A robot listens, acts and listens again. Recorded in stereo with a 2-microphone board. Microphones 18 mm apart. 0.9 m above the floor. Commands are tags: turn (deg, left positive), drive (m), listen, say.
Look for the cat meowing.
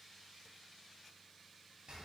<listen/>
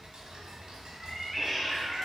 <turn deg="-30"/>
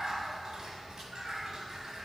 <turn deg="-140"/>
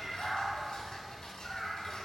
<turn deg="20"/>
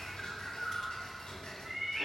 <say>Found it: a cat meowing, straight ahead, 2 to 4 m away.</say>